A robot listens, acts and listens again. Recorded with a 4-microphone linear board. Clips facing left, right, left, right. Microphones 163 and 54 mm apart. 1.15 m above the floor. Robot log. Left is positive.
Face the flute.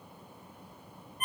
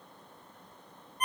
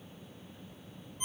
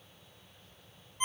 cmd idle
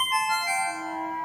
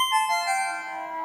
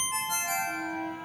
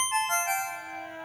cmd yaw +90
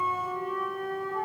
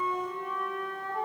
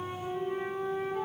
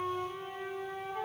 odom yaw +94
end: Facing the flute.